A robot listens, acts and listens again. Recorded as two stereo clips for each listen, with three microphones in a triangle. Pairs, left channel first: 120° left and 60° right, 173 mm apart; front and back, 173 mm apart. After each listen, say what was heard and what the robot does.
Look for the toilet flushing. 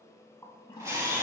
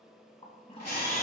The toilet flushing: 55° left. Turn 55° left.
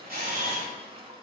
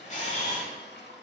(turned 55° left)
Found it: a toilet flushing, straight ahead, under 1 m away.